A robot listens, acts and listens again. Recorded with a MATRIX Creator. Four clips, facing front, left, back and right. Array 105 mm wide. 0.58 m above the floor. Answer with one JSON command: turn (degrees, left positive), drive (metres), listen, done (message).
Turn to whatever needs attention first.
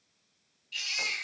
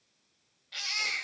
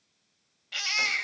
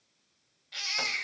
{"turn": 180}
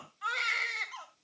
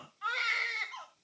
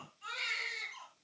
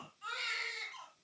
{"turn": 40}
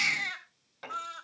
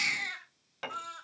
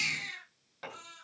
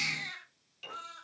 {"turn": 15}
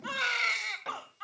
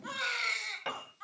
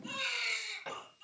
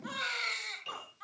{"done": "Facing the baby crying, 2 to 4 m away."}